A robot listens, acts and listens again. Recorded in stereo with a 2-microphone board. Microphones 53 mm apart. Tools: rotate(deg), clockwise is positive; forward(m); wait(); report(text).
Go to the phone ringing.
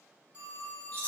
rotate(30)
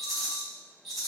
wait()
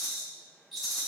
wait()
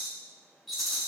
report("I heard a phone ringing, but can't make it out now. It was about straight ahead or 120° right. I did not reach it.")